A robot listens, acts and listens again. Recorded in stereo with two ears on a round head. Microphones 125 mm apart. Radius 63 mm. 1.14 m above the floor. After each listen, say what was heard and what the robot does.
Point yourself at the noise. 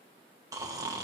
The snoring: about 25° right or 155° right. Turn 25° right.
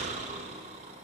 So it is at 130° right. Turn 130° right.
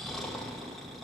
Found it: snoring, straight ahead.